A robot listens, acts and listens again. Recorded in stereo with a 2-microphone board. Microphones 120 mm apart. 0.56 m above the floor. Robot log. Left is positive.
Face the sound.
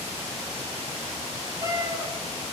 note: The cat meowing: about 35° right or 145° right.
cmd yaw -35
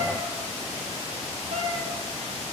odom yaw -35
note: So it is at 110° right.
cmd yaw -110
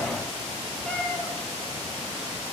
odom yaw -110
note: The cat meowing is now 10° left.
cmd yaw +10
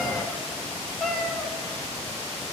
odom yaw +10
end: Found it: a cat meowing, straight ahead.